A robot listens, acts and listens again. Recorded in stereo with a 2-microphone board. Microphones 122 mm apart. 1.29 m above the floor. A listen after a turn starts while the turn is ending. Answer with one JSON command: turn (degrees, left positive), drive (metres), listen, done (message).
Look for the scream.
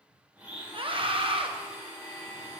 {"turn": -45}
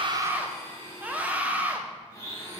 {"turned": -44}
{"turn": -15}
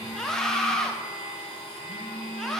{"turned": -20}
{"done": "Found it: a scream, straight ahead, 1 to 2 m away."}